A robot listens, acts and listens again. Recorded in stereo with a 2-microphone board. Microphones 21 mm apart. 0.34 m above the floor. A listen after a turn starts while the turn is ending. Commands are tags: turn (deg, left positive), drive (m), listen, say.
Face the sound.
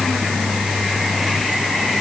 <listen/>
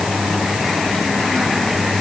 <listen/>
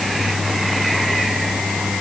<say>I can't make out anything.</say>